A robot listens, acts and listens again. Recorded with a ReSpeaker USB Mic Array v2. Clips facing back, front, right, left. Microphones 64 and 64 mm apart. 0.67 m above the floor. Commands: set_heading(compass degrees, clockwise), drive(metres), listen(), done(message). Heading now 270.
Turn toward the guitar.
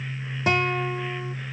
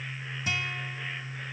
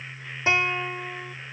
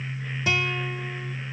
set_heading(60)
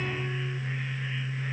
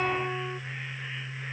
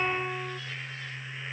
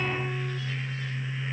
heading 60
set_heading(90)
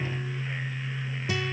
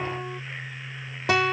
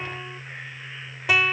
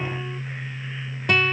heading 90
done("Facing the guitar.")